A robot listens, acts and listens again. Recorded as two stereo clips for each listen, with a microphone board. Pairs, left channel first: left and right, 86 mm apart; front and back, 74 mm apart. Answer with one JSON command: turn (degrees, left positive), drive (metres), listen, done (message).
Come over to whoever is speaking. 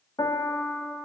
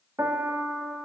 {"listen": true}
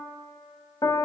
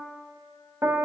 {"listen": true}
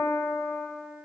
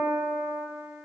{"done": "I can't make out anyone speaking, only a piano."}